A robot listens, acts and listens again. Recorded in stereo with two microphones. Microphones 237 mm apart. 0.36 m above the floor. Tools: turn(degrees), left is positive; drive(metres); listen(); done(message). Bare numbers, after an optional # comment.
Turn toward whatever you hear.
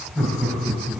turn(30)
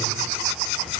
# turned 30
listen()
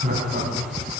# So it is at 35° right.
turn(-35)
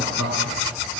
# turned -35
done("Found it: laughter, straight ahead, 2 to 4 m away.")